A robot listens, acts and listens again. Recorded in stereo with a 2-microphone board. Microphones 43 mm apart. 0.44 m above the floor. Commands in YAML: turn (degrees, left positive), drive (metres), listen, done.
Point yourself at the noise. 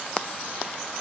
listen: true
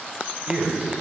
turn: -30
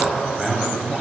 turn: -15
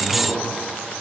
listen: true
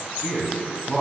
turn: -30
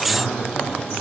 turn: 10
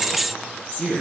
done: "Found it: a man speaking, straight ahead, over 4 m away."